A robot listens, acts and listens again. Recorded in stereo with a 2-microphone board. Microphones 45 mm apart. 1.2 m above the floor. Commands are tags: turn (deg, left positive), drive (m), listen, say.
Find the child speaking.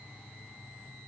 <listen/>
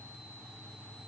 <listen/>
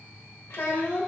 <turn deg="65"/>
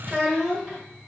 <say>Facing the child speaking.</say>